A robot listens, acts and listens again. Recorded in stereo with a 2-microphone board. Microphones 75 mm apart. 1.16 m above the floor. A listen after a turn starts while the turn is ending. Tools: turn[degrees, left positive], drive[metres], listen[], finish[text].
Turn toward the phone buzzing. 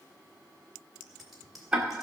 Action: listen[]
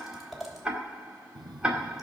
Thought: The phone buzzing: about 70° right or 110° right.
Action: turn[-70]
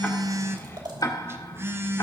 Thought: So it is at 35° right.
Action: turn[-35]
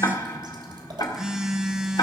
Thought: The phone buzzing is now 10° right.
Action: turn[-10]
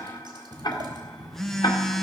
Action: finish[Facing the phone buzzing.]